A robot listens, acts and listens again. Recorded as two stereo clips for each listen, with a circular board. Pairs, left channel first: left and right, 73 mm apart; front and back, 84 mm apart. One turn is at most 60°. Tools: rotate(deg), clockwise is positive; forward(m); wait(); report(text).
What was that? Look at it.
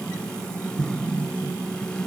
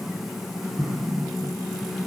rotate(60)
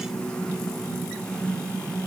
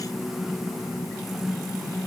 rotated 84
rotate(60)
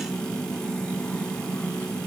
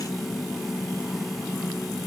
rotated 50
rotate(35)
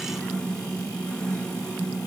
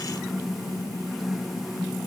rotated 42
rotate(-10)
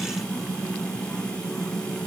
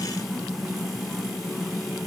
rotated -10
report("Facing where the explosion came from. I can't hear it now.")